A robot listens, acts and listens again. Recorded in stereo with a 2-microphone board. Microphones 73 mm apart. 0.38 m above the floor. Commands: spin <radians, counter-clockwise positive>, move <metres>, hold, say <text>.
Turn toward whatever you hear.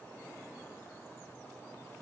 hold
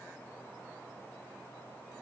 hold
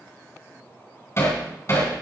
spin 0.70
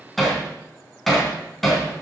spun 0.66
say Found it: hammering, straight ahead.